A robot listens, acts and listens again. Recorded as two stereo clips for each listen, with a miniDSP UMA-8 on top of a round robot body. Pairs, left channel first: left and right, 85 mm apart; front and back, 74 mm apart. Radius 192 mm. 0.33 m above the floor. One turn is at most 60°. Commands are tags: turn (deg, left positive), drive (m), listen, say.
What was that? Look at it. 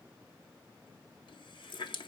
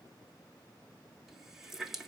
<turn deg="60"/>
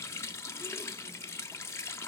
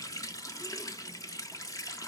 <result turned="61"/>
<turn deg="35"/>
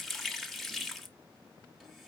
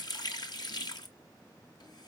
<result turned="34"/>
<say>Found it: a running tap, straight ahead, 1 to 2 m away.</say>